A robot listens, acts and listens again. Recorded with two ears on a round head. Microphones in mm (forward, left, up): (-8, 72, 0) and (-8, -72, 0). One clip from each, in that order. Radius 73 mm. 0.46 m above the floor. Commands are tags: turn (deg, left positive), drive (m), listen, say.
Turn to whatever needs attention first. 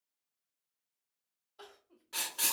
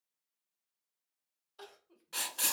<turn deg="-40"/>
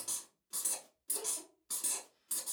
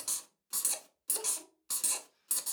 <listen/>
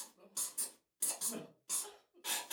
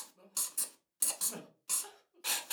<turn deg="-95"/>
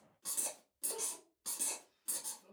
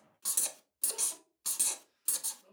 <turn deg="-15"/>
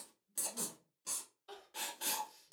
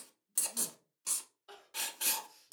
<say>Facing the crying.</say>